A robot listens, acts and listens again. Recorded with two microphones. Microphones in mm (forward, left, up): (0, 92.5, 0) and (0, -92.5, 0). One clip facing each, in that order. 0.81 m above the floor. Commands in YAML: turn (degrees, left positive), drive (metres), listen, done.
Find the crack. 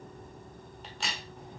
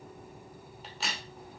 turn: 30
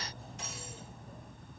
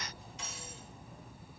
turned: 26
listen: true
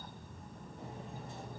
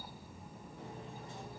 done: "I heard a crack, but can't make it out now. It was about 30° right or 155° left."